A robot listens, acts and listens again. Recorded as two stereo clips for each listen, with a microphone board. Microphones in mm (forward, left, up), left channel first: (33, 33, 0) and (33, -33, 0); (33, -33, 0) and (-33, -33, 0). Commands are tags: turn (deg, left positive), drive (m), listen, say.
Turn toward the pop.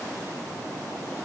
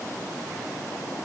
<listen/>
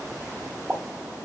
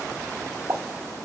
<turn deg="-160"/>
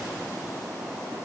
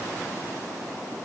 <say>Facing where the pop came from. I can't hear it now.</say>